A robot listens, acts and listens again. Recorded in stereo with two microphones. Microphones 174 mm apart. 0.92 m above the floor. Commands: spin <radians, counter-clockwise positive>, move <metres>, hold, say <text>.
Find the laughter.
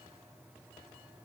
hold
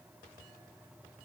hold
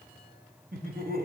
spin -1.05
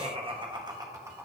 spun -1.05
spin -0.26
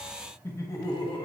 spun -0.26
spin 0.44
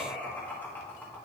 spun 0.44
spin 0.17
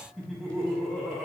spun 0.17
say Found it: laughter, straight ahead, 1 to 2 m away.